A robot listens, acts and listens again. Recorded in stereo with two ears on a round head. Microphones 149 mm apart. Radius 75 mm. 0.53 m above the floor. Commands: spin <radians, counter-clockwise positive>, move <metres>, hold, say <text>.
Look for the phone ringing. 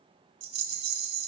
hold
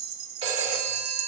spin -0.61
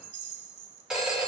say Facing the phone ringing, 1 to 2 m away.